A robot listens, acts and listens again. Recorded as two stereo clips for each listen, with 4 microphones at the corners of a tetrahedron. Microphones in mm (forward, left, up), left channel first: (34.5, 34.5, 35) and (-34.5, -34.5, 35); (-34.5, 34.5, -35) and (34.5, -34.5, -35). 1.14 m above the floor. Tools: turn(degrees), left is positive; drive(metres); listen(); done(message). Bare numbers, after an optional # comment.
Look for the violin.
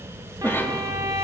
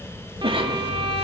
# The violin: 80° right.
turn(-80)
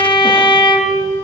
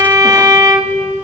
done("Found it: a violin, straight ahead, 2 to 4 m away.")